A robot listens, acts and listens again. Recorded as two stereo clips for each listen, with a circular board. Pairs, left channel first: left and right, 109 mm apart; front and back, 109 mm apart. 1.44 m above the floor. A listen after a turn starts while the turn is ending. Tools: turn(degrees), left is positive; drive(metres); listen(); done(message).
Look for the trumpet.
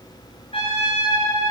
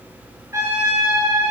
turn(degrees=115)
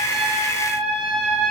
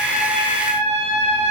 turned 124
done("Facing the trumpet, over 4 m away.")